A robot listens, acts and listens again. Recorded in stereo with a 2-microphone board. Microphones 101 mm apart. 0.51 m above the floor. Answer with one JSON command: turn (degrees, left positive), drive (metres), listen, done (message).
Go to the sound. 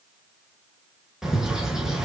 {"turn": -30}
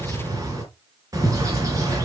{"turn": -145}
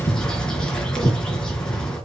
{"turn": 10}
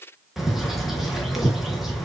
{"drive": 1.0}
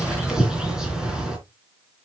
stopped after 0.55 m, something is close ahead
{"done": "Blocked. The bird is further on, straight ahead."}